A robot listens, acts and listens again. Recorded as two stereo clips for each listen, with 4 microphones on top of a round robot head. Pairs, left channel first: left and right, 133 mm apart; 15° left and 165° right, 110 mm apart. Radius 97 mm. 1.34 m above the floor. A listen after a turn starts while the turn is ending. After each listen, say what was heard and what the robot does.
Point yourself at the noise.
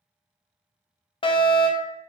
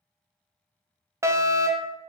The fire alarm: 135° left. Turn 135° left.
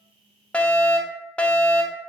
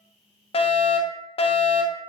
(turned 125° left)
The fire alarm is now 10° left. Turn 10° left.
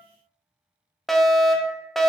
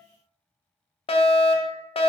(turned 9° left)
Found it: a fire alarm, straight ahead, 1 to 2 m away.